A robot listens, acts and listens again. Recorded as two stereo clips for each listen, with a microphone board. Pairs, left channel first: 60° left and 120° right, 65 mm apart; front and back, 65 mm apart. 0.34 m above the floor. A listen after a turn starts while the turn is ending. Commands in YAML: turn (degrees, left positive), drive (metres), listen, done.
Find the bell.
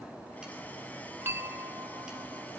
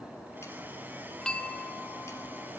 turn: -75
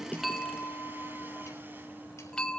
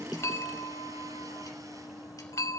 turn: -15
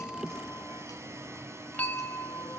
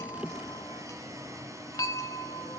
done: "Facing the bell."